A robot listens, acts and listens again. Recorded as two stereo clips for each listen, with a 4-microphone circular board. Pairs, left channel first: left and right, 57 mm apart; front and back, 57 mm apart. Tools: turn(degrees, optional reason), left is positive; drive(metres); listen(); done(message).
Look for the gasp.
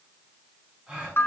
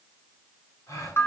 turn(degrees=-15, reason="The gasp: 15° right.")
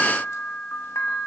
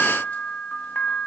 done("Facing where the gasp came from. I can't hear it now.")